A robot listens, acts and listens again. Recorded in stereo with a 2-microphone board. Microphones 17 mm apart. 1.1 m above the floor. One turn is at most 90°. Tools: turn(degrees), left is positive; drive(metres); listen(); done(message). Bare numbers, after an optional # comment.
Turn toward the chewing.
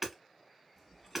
# The chewing: about 25° left or 155° left.
turn(25)
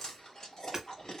# So it is at 125° left.
turn(90)
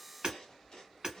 # The chewing is now 60° left.
turn(60)
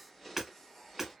done("Found it: chewing, straight ahead, 1 to 2 m away.")